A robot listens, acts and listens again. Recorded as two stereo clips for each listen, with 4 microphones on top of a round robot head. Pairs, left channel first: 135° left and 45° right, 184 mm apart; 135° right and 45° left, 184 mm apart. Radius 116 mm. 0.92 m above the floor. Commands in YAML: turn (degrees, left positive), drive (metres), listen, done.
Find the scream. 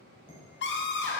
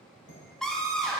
turn: 135
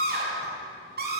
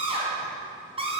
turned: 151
turn: -15
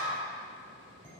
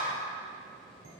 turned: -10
done: "Found it: a scream, straight ahead."